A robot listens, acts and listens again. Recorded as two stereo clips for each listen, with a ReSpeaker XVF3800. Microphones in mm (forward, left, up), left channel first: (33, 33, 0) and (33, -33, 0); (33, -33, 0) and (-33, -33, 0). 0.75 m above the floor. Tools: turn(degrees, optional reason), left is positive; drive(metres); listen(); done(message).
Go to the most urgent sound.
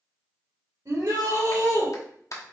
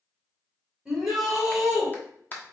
turn(degrees=-95, reason="The shout: 95° right.")
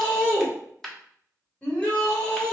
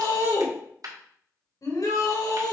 turn(degrees=20, reason="The shout is now 20° left.")
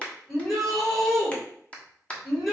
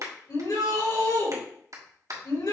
drive(metres=1.0)
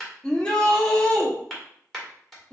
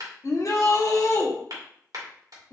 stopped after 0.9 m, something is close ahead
turn(degrees=15, reason="The shout is now 15° left.")
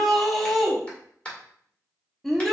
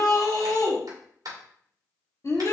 done("Arrived at the shout, straight ahead.")